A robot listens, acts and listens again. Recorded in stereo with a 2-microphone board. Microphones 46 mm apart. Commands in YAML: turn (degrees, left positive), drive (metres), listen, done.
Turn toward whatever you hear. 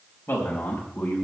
turn: 50
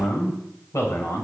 turn: 75
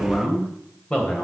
turn: 25
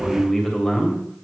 turn: 15
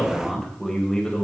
turn: 15
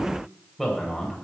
done: "Facing the man speaking."